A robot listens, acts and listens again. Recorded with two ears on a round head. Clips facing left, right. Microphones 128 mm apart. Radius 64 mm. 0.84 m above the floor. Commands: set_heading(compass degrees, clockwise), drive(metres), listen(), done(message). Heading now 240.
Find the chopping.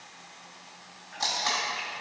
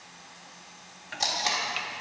set_heading(330)
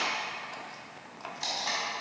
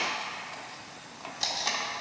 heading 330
done("Facing the chopping, under 1 m away.")